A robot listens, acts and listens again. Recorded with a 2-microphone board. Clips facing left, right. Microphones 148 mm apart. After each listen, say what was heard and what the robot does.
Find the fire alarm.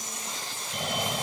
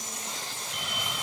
The fire alarm: about 45° left or 135° left. Turn 45° left.
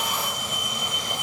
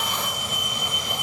Found it: a fire alarm, straight ahead.